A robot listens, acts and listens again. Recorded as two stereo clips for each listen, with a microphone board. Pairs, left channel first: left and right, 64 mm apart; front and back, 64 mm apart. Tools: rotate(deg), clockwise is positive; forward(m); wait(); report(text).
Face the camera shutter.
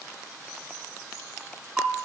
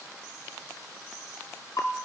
wait()
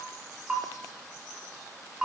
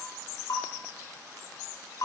wait()
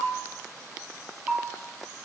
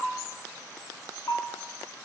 report("I can't make out a camera shutter to turn to.")